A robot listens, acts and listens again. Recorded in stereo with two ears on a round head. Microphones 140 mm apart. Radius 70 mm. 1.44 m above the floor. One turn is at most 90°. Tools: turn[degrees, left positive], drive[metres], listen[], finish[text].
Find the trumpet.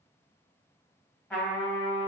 Action: turn[30]
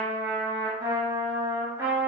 Thought: So it is at 15° right.
Action: turn[-15]
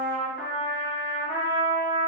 Action: finish[Facing the trumpet, 1 to 2 m away.]